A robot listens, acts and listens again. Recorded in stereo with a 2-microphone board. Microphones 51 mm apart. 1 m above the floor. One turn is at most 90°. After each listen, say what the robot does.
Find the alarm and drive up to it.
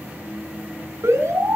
Turn 90° right.
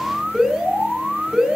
Turn 10° right.
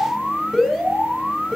Drive 1.0 m forward.
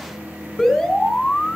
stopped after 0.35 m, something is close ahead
Blocked. The alarm is further on, straight ahead.